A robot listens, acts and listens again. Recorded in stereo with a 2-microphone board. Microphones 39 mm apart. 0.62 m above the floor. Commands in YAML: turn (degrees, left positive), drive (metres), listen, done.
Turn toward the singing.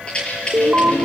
turn: 90
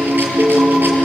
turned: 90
turn: -10
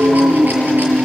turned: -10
turn: -10
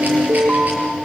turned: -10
turn: -10
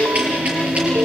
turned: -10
turn: -10
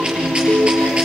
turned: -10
done: "Facing the singing, over 4 m away."